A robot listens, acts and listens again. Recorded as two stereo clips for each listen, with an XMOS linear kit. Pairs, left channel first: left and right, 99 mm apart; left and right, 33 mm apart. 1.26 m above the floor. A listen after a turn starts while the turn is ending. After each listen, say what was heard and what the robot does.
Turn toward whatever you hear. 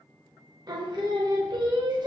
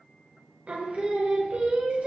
The singing: about 45° right or 135° right. Turn 45° right.
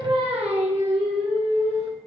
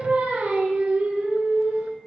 So it is at 95° right. Turn 95° right.
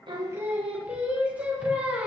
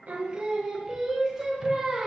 The singing is now 15° right. Turn 15° right.
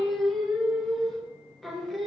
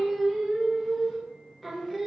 Facing the singing, 1 to 2 m away.